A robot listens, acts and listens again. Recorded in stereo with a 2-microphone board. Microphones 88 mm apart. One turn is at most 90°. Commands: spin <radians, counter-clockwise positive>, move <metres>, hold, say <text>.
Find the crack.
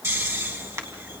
spin -0.52
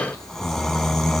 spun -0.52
hold
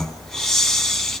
say I heard a crack, but can't make it out now. It was about straight ahead or 120° right.